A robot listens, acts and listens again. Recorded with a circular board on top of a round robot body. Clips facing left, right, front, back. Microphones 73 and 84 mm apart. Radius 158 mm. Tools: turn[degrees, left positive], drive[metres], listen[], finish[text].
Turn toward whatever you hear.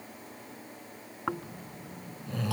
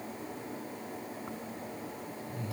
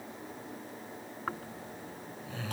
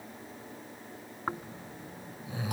Thought: The snoring: 105° left.
Action: turn[105]
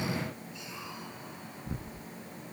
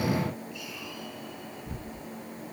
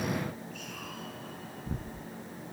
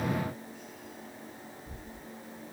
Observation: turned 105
Thought: The snoring is now 25° left.
Action: turn[25]
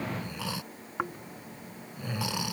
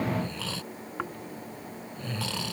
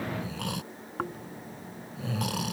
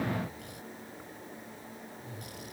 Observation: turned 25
Thought: The snoring is now 15° left.
Action: turn[15]
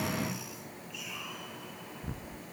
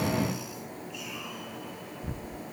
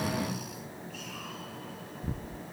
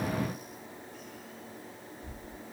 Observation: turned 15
Action: finish[Facing the snoring.]